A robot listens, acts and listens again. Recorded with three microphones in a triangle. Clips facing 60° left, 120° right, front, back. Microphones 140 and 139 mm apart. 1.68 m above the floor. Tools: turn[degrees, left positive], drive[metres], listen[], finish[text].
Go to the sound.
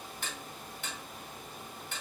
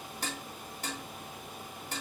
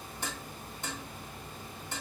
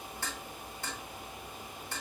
Thought: The dishes clattering: 70° right.
Action: turn[-70]
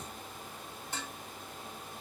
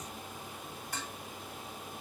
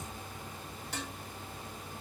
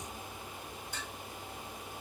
Action: drive[1.0]
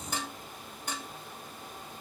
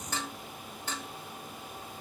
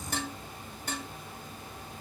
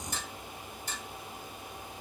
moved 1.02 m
Thought: The dishes clattering is now 15° right.
Action: turn[-15]
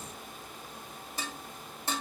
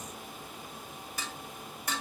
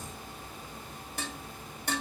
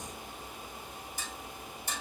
Action: drive[1.0]
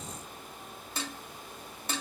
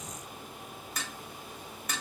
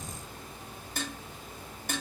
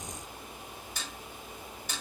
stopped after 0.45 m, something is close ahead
Action: finish[Arrived at the dishes clattering, straight ahead.]